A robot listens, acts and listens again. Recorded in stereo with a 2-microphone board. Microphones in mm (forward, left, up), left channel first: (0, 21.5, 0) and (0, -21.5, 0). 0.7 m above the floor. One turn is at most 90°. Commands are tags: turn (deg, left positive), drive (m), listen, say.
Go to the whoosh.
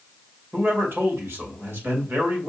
<listen/>
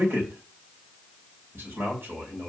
<listen/>
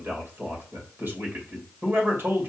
<say>I can't make out a whoosh to turn to.</say>